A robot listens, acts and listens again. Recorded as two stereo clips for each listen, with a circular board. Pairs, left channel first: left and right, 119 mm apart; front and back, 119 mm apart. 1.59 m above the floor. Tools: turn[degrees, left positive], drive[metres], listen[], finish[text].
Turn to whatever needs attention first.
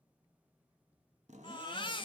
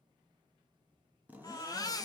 Thought: The baby crying: 50° left.
Action: turn[50]
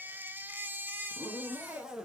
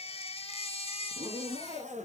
Thought: The baby crying is now 15° right.
Action: turn[-15]
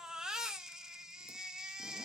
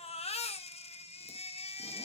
Action: finish[Found it: a baby crying, straight ahead.]